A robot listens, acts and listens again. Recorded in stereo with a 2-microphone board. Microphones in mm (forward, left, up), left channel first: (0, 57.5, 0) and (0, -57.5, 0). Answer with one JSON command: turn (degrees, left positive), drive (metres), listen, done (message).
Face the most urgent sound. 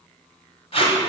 {"listen": true}
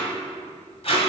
{"listen": true}
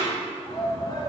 {"turn": 35}
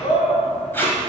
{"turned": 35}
{"turn": 100}
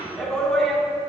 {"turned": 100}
{"done": "Found it: a shout, straight ahead."}